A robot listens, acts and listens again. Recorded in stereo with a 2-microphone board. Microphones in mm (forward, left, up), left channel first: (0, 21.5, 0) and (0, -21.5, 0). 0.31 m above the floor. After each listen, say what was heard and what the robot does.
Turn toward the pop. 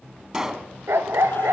Turn 30° right.
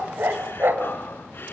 Keep listening.
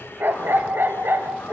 I heard a pop, but can't make it out now. It was about 15° left or 135° right.